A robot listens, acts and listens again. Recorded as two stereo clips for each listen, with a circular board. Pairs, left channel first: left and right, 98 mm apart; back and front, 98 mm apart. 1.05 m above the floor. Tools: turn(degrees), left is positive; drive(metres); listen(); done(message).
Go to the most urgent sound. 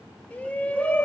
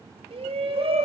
turn(degrees=15)
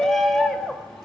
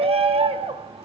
drive(metres=1.0)
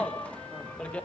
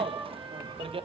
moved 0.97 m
turn(degrees=10)
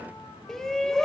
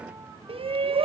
drive(metres=1.0)
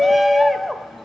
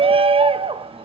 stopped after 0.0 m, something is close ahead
done("I am next to the shout.")